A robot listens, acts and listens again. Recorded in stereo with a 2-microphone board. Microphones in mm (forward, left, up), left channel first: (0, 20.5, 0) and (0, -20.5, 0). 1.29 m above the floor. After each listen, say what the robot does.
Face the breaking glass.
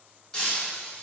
Turn 30° left.
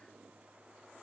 Keep listening.
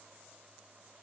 I heard breaking glass, but can't make it out now. It was about 15° right or 135° left.